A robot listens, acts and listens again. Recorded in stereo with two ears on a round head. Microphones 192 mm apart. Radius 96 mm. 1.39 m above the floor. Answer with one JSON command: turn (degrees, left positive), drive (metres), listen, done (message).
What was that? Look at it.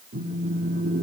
{"turn": -40}
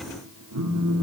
{"turn": -95}
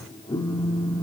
{"turn": 20}
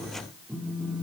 {"done": "Facing the phone buzzing."}